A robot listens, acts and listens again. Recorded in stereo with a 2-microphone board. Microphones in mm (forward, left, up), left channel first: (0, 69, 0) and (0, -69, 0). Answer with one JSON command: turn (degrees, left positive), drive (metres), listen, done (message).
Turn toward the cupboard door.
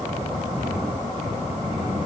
{"listen": true}
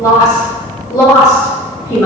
{"listen": true}
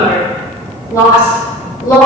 {"done": "I can't make out a cupboard door, only a woman speaking."}